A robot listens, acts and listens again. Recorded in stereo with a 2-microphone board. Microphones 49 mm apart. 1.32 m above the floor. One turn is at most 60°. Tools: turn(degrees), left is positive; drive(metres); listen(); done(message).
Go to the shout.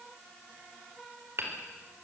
listen()
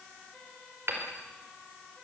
listen()
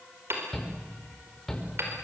turn(degrees=30)
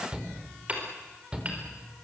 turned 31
turn(degrees=-20)
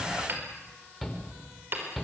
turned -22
drive(metres=1.0)
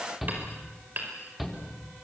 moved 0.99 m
drive(metres=1.0)
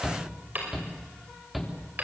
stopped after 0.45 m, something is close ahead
done("Blocked. The shout is further on, straight ahead.")